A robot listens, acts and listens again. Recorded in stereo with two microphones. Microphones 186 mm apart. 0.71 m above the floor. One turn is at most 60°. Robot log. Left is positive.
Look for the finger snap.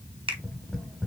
cmd idle
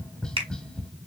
note: The finger snap: about 30° right or 150° right.
cmd yaw -30
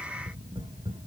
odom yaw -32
cmd idle
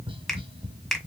end: Facing the finger snap, 1 to 2 m away.